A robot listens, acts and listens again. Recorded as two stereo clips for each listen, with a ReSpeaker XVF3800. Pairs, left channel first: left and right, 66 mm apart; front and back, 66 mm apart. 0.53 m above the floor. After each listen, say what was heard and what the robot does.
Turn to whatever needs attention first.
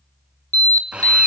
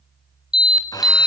The alarm: 100° right. Turn 100° right.
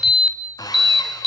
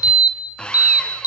Facing the alarm.